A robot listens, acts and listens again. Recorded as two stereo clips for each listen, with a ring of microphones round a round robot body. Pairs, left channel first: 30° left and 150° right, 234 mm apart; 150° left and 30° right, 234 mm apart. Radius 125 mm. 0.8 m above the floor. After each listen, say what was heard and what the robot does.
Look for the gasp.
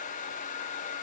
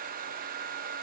Keep listening.
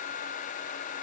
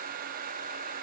Keep listening.
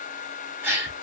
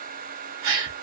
The gasp: 70° right. Turn 70° right.
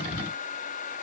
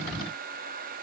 Facing where the gasp came from. I can't hear it now.